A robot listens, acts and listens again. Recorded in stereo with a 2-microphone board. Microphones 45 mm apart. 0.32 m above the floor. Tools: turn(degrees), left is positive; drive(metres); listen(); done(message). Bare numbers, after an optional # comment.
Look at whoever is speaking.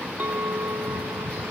listen()
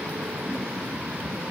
listen()
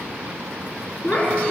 # The child speaking: about 35° left or 145° left.
turn(35)
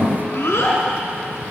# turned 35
# So it is at 110° left.
turn(110)
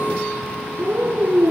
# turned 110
# The child speaking is now 30° right.
turn(-30)
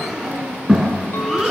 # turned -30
done("Facing the child speaking, 2 to 4 m away.")